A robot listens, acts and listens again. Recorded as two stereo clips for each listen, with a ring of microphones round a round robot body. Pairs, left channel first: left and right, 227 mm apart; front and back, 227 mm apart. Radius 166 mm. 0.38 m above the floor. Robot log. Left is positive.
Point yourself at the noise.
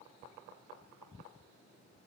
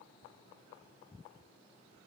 cmd idle
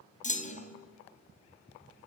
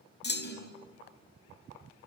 note: The clunk: 35° left.
cmd yaw +35
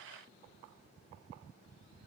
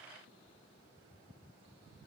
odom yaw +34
end: I heard a clunk from this way, but can't make it out now.